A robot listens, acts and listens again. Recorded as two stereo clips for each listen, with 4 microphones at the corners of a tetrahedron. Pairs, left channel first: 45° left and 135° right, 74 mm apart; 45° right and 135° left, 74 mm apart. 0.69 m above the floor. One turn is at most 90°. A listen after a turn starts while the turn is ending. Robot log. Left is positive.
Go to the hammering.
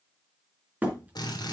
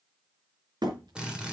note: The hammering: 155° left.
cmd yaw +90
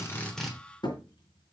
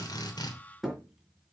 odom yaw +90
note: The hammering is now 50° left.
cmd yaw +50
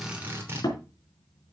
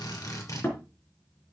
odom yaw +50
note: The hammering is now 15° left.
cmd yaw +15
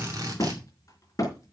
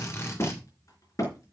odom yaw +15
cmd fwd 1.0
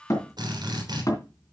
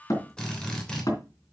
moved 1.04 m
cmd fwd 1.0
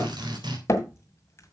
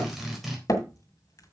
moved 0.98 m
cmd fwd 1.0
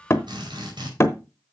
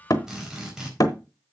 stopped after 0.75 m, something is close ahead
note: The hammering is now 10° right.
cmd yaw -10
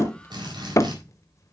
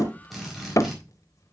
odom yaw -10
end: Arrived at the hammering, straight ahead.